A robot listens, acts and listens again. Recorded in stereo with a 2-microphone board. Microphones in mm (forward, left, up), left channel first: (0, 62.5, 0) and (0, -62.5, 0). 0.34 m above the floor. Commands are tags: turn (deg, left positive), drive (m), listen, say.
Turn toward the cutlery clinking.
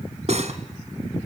<turn deg="-65"/>
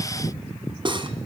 <turn deg="-45"/>
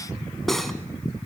<say>Facing the cutlery clinking, 2 to 4 m away.</say>